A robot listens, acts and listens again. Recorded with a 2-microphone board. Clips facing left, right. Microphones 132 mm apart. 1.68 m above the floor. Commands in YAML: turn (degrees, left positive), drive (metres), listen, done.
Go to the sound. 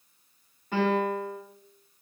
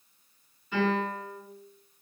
turn: 60
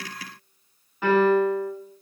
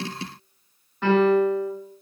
drive: 1.0
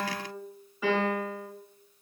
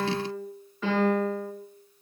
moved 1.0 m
turn: 10
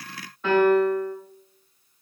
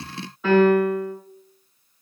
drive: 1.0
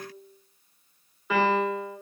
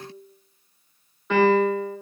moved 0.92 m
drive: 1.0
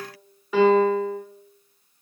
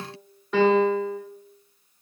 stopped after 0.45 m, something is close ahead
done: "Arrived at the piano, straight ahead."